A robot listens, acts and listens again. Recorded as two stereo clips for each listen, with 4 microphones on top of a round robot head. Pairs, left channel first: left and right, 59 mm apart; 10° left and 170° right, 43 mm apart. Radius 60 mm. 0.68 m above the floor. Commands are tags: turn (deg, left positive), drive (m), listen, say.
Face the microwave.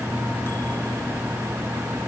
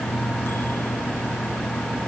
<listen/>
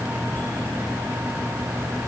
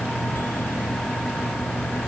<listen/>
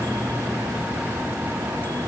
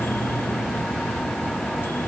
<say>I can't make out a microwave.</say>